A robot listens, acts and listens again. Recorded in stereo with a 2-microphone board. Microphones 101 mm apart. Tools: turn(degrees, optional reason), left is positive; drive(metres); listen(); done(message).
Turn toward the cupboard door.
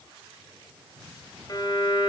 listen()
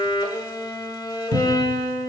turn(degrees=-90)
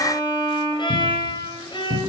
done("Found it: a cupboard door, straight ahead, under 1 m away.")